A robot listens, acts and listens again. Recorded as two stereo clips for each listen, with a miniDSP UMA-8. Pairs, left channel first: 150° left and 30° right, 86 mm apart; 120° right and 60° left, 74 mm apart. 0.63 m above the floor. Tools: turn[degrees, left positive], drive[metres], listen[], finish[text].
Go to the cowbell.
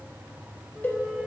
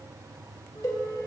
Thought: The cowbell: 145° right.
Action: turn[-145]
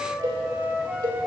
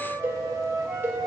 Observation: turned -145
Action: drive[1.0]
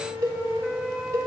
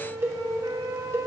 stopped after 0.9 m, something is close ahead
Thought: The cowbell is now 10° left.
Action: turn[10]
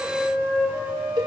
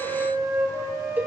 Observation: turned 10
Action: finish[Arrived at the cowbell, straight ahead.]